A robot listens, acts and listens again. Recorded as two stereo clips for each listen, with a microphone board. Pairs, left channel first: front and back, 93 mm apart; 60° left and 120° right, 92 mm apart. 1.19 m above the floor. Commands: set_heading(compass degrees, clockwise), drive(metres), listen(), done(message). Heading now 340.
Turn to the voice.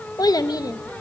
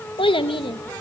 set_heading(295)
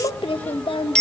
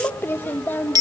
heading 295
done("Found it: a child speaking, straight ahead, 1 to 2 m away.")